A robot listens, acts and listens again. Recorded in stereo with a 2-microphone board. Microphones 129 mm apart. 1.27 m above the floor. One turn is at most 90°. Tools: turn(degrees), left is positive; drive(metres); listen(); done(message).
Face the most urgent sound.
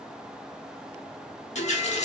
listen()
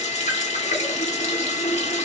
listen()
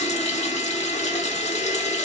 done("I can't make out anything urgent, only a running tap.")